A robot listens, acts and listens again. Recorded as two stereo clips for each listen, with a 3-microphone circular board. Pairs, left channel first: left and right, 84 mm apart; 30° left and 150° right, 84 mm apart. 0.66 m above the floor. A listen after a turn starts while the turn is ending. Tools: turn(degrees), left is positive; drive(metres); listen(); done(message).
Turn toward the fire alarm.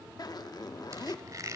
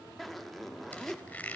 listen()
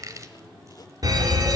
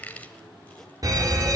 turn(degrees=-120)
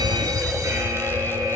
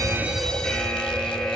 turn(degrees=-50)
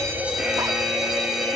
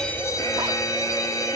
turn(degrees=-10)
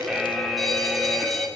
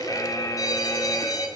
done("Found it: a fire alarm, straight ahead.")